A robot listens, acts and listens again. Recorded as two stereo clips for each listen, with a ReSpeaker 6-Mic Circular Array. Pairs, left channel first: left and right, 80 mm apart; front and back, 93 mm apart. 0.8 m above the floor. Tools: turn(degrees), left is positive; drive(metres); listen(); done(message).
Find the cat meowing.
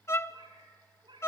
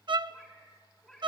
turn(degrees=-85)
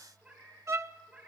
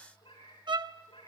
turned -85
turn(degrees=-15)
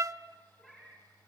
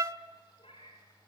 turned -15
done("Found it: a cat meowing, straight ahead, over 4 m away.")